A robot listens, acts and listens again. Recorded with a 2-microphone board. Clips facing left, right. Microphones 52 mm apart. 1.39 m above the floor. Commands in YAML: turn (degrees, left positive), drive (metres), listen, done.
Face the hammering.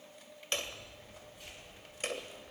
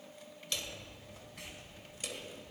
turn: 45
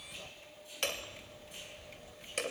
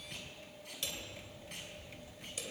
turn: 85
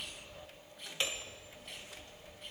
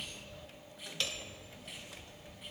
turn: 25
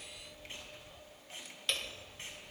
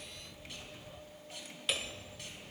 turn: -10
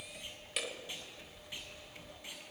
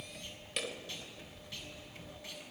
done: "Facing the hammering."